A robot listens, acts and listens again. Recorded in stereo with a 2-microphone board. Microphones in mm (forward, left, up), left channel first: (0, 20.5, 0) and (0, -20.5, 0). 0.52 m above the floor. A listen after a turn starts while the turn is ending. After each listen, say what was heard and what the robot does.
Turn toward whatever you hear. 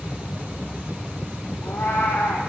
The cat meowing: about 75° left or 105° left. Turn 75° left.
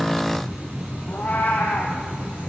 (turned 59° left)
So it is at 45° left. Turn 45° left.
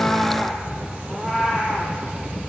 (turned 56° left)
The cat meowing is now 10° right. Turn 10° right.
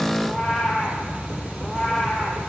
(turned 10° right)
Found it: a cat meowing, straight ahead.